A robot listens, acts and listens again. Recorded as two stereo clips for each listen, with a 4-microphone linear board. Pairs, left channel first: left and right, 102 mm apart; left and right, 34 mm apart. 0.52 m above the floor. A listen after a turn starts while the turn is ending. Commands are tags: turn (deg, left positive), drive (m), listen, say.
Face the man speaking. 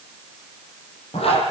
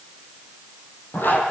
<listen/>
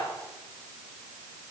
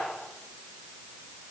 <listen/>
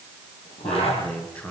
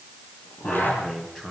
<turn deg="30"/>
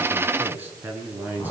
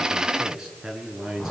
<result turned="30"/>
<turn deg="-15"/>
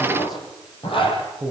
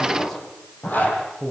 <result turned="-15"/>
<say>Facing the man speaking.</say>